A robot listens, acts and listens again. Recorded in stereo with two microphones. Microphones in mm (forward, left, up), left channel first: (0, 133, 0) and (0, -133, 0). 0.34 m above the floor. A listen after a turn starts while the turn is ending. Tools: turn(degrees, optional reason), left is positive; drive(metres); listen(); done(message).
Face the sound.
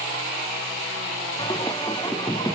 turn(degrees=15, reason="The singing: about 15° left or 165° left.")
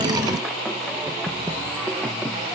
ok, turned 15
turn(degrees=30)
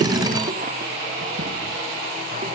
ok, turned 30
listen()
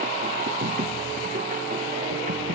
turn(degrees=-30, reason="So it is at 30° right.")
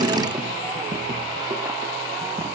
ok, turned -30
turn(degrees=-10, reason="The singing is now 10° right.")
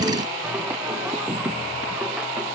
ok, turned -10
done("Facing the singing.")